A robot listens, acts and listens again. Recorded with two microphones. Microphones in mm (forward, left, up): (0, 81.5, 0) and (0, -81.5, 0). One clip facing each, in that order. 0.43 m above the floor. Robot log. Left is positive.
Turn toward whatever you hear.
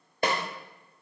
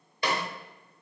note: The snare drum: about 50° left or 130° left.
cmd yaw +50
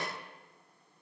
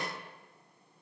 cmd idle
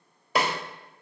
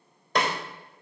end: Facing the snare drum.